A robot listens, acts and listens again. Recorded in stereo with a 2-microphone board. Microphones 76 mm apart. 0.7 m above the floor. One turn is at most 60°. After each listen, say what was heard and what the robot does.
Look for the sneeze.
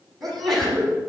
Turn 30° left.
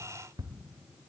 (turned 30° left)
Keep listening.
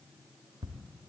I heard a sneeze, but can't make it out now. It was about 30° right or 150° left.